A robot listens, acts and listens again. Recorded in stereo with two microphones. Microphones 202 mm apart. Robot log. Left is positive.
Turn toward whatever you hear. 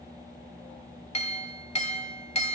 note: The clink: about 35° left or 145° left.
cmd yaw +35
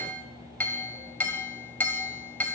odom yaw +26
note: So it is at 10° left.
cmd yaw +10
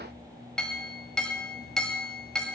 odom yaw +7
end: Facing the clink, 1 to 2 m away.